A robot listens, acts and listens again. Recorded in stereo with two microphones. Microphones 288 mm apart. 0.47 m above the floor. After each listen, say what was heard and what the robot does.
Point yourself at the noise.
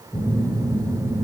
Turn 30° left.
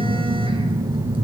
So it is at 20° right. Turn 20° right.
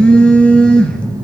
Facing the phone buzzing, 2 to 4 m away.